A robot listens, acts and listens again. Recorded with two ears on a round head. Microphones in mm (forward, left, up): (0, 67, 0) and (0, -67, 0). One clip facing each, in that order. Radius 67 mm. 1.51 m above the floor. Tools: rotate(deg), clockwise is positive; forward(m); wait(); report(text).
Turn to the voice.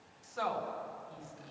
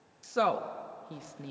rotate(70)
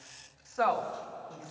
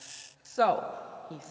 rotate(40)
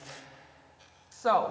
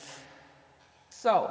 rotate(20)
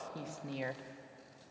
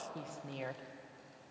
report("Facing the woman speaking.")